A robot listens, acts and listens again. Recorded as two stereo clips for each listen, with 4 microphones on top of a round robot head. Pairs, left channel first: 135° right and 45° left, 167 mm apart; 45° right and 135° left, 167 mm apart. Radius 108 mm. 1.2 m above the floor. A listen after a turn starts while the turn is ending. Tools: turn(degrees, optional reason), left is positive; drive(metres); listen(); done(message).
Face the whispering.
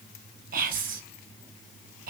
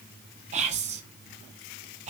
turn(degrees=85, reason="The whispering: 85° left.")
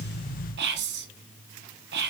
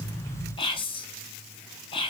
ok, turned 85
turn(degrees=20, reason="The whispering is now 20° left.")
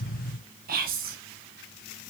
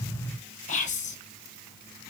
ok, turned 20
done("Found it: whispering, straight ahead.")